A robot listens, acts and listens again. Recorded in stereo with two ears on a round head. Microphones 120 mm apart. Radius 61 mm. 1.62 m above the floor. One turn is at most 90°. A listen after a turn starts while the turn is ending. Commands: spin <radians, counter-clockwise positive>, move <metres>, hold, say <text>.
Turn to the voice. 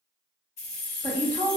spin 0.35
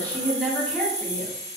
say Found it: a woman speaking, straight ahead, under 1 m away.